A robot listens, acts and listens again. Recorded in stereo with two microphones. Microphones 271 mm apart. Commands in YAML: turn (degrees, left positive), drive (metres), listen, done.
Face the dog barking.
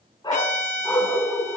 turn: 30
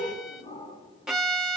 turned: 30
turn: 160
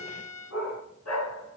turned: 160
turn: 70
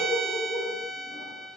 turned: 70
turn: 20
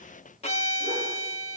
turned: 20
listen: true
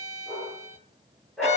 done: "Facing the dog barking."